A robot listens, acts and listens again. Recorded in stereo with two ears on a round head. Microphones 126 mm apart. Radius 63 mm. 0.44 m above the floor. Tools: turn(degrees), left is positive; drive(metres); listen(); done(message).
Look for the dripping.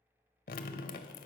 turn(degrees=70)
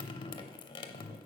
turn(degrees=35)
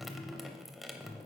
done("Found it: dripping, straight ahead, under 1 m away.")